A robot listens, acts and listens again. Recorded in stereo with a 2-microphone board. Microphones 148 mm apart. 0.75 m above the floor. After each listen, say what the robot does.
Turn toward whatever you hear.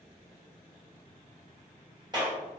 Turn 25° right.
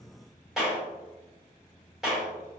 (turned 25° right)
Facing the clap.